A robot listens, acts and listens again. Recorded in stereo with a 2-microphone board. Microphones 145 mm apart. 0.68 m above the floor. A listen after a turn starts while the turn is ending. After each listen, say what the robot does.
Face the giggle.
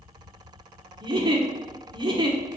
Turn 30° right.
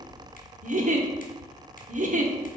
Turn 115° right.
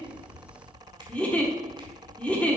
Turn 10° left.
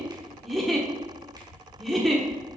Found it: a giggle, straight ahead.